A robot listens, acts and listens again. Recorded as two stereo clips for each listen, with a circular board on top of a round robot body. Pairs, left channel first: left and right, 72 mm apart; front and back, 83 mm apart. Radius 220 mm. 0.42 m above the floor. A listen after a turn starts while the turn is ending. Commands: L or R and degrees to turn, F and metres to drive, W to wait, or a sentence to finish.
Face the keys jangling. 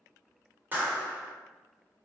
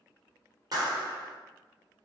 W
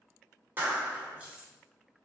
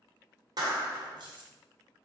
R165
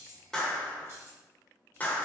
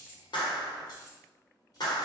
R40
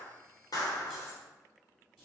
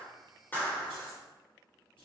Facing the keys jangling.